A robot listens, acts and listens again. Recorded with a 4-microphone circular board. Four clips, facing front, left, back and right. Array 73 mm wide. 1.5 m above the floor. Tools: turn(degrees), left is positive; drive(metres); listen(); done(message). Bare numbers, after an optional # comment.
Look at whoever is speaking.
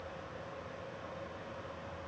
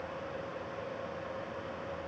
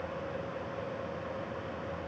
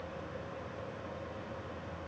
listen()
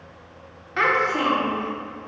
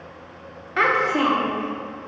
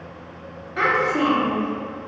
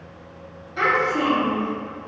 # The child speaking: 70° left.
turn(70)
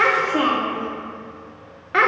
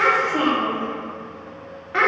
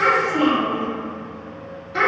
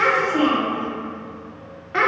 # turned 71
done("Found it: a child speaking, straight ahead.")